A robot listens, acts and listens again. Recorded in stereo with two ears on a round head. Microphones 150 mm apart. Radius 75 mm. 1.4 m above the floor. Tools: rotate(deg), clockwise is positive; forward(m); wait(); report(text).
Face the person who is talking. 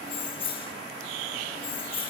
wait()
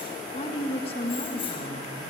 rotate(-35)
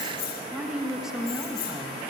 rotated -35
report("Facing the woman speaking.")